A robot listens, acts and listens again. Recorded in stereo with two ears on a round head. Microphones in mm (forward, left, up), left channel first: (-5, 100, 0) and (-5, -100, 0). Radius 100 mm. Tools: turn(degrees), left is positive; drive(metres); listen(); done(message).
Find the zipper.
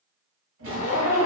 turn(degrees=90)
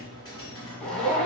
done("Found it: a zipper, straight ahead.")